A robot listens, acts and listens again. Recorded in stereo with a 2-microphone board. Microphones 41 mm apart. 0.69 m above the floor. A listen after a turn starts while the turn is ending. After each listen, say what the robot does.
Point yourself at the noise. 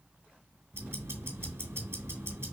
Turn 90° right.
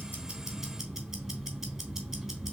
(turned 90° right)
Turn 15° right.
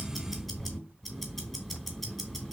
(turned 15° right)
Found it: ticking, straight ahead.